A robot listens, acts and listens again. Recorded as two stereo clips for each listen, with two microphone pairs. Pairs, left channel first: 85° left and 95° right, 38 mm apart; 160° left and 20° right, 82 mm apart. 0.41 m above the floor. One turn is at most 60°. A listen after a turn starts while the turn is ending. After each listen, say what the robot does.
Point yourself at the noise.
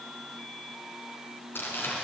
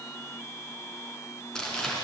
Turn 60° left.
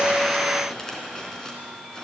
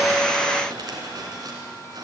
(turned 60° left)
Turn 15° left.
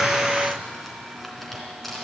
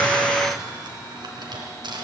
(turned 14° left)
Found it: crumpling, straight ahead.